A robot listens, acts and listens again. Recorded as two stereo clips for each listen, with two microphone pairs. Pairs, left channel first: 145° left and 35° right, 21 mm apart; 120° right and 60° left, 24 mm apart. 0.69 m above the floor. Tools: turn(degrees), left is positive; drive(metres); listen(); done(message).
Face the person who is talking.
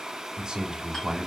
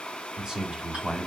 done("Found it: a man speaking, straight ahead.")